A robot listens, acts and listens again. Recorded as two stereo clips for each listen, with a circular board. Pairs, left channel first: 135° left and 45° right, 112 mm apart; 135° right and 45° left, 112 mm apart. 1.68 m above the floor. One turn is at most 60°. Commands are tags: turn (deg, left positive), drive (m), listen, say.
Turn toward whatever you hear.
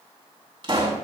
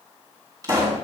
<say>Found it: a pop, straight ahead.</say>